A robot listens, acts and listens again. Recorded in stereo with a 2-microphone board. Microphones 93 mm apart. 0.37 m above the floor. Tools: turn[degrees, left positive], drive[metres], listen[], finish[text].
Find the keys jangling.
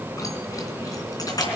Thought: The keys jangling: about 40° left or 140° left.
Action: turn[40]
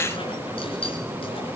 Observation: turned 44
Thought: So it is at 100° left.
Action: turn[100]
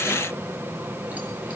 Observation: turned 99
Action: listen[]
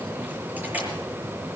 Thought: The keys jangling is now 15° right.
Action: turn[-15]
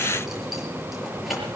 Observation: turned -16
Action: finish[Found it: keys jangling, straight ahead.]